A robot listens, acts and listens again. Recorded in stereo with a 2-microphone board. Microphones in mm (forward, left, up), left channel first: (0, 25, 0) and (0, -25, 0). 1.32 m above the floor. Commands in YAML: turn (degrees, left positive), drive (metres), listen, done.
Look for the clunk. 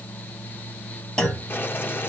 turn: 15
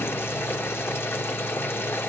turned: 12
listen: true
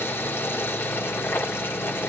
done: "I heard a clunk, but can't make it out now. It was about 5° left or 155° left."